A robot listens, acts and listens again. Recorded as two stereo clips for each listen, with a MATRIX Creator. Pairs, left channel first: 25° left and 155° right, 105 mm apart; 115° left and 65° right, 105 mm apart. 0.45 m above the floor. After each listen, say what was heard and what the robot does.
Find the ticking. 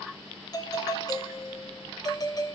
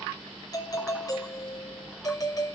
Keep listening.
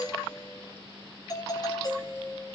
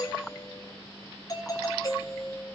Keep listening.
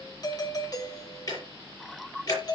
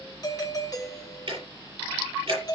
The ticking: 30° right. Turn 30° right.
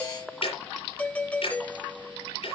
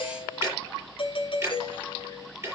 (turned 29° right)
Found it: ticking, straight ahead, over 4 m away.